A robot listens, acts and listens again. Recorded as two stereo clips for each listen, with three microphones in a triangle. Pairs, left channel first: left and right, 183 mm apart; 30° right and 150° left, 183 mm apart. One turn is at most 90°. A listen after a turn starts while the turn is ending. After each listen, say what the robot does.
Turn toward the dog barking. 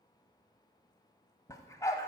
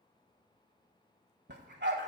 Turn 90° left.
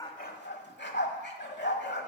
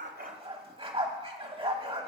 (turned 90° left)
Turn 90° left.
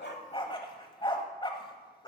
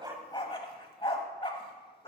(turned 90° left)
Turn 25° left.
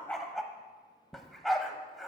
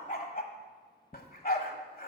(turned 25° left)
Found it: a dog barking, straight ahead, 1 to 2 m away.